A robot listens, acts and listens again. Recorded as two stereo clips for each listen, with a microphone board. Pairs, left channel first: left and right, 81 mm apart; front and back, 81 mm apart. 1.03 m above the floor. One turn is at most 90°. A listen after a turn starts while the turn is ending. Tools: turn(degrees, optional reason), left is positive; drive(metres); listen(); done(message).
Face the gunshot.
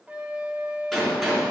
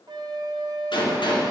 done("Facing the gunshot, 2 to 4 m away.")